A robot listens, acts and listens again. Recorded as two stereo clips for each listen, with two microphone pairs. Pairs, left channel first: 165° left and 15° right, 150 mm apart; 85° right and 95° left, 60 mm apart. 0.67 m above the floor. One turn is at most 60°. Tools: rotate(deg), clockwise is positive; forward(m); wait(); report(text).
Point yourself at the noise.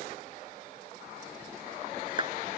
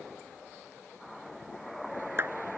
rotate(-45)
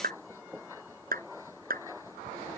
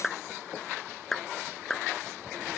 report("Found it: a clap, straight ahead.")